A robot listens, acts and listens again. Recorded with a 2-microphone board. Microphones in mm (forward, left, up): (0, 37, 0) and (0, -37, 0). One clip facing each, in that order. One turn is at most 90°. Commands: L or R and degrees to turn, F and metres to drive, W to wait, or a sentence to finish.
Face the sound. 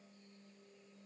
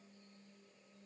W
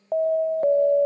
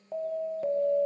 L50
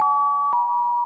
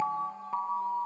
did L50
L75
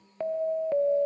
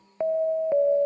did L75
R20
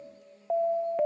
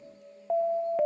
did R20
Found it: an alarm, straight ahead.